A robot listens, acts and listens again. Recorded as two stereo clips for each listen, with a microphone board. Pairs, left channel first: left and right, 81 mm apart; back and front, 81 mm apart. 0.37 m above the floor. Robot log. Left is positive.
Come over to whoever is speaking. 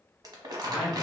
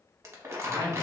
cmd fwd 1.0
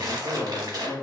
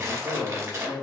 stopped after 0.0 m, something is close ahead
end: Something is in my way. I am facing the man speaking but have not reached it.